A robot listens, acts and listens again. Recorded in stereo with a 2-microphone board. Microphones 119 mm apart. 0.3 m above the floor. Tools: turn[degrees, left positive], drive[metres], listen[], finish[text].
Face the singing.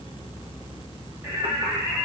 Thought: The singing: about 20° right or 160° right.
Action: turn[-20]
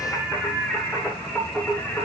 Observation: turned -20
Thought: So it is at 10° left.
Action: turn[10]
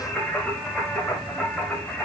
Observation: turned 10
Action: finish[Found it: singing, straight ahead.]